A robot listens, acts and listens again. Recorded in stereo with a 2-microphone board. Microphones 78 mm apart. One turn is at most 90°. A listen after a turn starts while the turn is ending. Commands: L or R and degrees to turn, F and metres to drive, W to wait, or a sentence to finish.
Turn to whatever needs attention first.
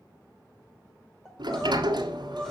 L30
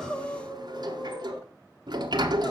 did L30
L90
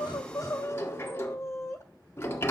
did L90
L35
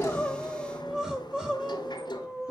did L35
R10
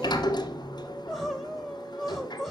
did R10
Facing the crying, 1 to 2 m away.